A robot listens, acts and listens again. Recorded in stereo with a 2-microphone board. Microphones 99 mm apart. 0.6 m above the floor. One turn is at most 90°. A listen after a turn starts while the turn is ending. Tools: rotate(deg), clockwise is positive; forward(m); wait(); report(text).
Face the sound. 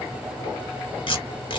rotate(-55)
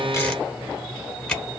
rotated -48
rotate(-10)
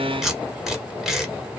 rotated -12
report("Facing the tape being pulled.")